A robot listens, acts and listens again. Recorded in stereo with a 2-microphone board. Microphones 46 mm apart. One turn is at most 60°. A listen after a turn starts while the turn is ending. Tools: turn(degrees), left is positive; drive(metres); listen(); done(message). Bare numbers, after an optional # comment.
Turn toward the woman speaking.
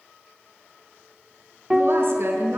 # The woman speaking: about 65° right or 115° right.
turn(-60)
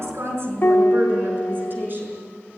# So it is at 45° right.
turn(-45)
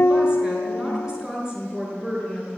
# The woman speaking is now 15° right.
turn(-15)
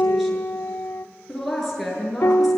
done("Facing the woman speaking, over 4 m away.")